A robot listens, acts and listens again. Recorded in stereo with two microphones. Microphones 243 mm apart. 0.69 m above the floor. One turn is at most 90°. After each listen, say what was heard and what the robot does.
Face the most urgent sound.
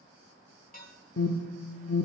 The alarm: about 75° left or 105° left. Turn 75° left.
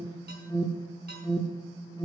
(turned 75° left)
So it is at 20° left. Turn 20° left.
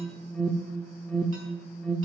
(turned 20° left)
Facing the alarm, under 1 m away.